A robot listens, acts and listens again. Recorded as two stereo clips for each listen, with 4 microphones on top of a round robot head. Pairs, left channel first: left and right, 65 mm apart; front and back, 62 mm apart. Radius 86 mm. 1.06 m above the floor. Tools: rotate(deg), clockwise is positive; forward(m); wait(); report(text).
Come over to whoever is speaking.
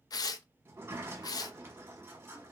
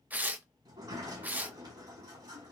wait()
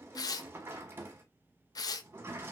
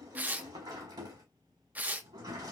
wait()
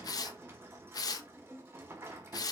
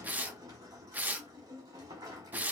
report("I can't make out anyone speaking to turn to.")